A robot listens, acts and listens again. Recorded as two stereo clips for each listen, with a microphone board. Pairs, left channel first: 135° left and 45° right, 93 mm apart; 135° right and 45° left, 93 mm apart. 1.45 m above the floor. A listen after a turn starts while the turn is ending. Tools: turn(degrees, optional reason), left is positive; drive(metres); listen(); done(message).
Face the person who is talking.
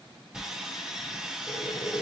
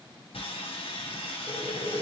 listen()
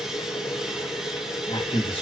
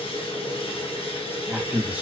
turn(degrees=120, reason="The man speaking: 120° left.")
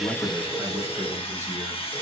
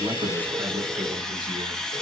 listen()
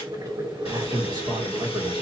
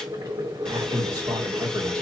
turn(degrees=-10, reason="The man speaking is now 10° right.")
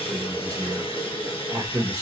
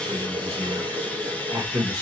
done("Found it: a man speaking, straight ahead.")